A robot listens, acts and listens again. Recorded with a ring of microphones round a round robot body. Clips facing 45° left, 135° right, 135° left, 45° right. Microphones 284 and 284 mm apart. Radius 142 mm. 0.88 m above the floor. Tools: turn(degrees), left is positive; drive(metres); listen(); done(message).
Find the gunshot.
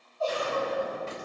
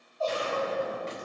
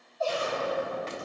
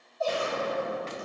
turn(degrees=-75)
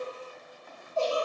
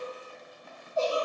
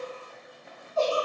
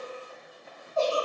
done("I heard a gunshot from this way, but can't make it out now.")